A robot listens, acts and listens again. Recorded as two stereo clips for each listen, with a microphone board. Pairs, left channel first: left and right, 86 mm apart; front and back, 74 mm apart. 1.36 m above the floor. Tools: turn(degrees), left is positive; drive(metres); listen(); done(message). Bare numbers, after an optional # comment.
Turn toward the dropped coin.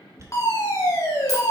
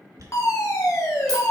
# The dropped coin: 140° right.
turn(-140)
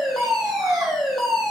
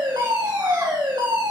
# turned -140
done("I heard a dropped coin from this way, but can't make it out now.")